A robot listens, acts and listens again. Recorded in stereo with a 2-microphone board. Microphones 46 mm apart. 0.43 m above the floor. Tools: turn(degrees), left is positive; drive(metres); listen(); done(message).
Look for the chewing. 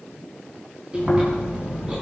turn(degrees=-20)
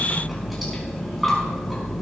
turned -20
done("Facing the chewing, over 4 m away.")